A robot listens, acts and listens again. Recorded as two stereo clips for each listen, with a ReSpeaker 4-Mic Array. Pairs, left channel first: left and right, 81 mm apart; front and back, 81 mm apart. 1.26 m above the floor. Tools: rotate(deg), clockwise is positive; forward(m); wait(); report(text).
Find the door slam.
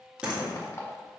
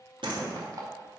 rotate(170)
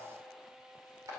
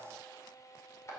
report("I heard a door slam from this way, but can't make it out now.")